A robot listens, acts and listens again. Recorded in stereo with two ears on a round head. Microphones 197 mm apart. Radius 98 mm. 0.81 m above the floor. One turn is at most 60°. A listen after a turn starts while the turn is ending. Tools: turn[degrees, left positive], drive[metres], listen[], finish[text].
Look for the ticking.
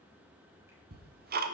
Thought: The ticking: about 45° right or 135° right.
Action: turn[-45]
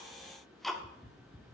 Action: finish[Found it: ticking, straight ahead, 1 to 2 m away.]